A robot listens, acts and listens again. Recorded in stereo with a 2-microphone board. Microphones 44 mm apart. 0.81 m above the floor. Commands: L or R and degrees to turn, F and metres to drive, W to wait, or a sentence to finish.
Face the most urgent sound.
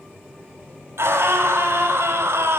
R75
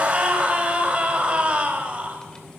R25
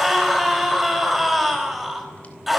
Found it: a scream, straight ahead, over 4 m away.